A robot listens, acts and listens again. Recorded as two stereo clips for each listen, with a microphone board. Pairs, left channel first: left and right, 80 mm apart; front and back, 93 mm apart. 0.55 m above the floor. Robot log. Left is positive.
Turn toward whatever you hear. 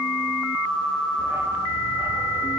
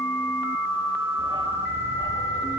note: The dog barking: 150° right.
cmd yaw -150
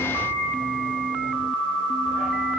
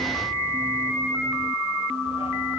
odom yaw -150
end: Found it: a dog barking, straight ahead.